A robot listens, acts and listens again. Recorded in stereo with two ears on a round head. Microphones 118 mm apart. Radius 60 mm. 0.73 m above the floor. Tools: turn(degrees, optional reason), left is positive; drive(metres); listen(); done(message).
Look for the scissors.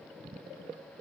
listen()
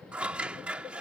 turn(degrees=-30)
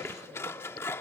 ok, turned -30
turn(degrees=20, reason="So it is at 20° left.")
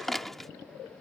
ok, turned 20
done("Facing the scissors.")